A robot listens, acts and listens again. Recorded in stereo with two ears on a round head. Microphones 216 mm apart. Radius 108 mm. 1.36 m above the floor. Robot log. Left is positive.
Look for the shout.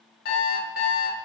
cmd idle
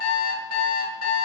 cmd idle
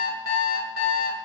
end: I can't make out a shout, only an alarm clock.